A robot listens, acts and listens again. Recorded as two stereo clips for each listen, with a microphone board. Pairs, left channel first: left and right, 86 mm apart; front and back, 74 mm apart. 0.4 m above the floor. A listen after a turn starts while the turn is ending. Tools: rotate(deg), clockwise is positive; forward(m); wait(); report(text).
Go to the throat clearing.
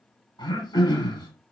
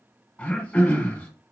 rotate(-70)
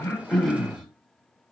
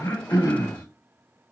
forward(1.0)
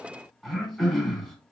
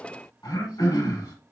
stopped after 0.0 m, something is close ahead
report("Blocked. The throat clearing is further on, straight ahead.")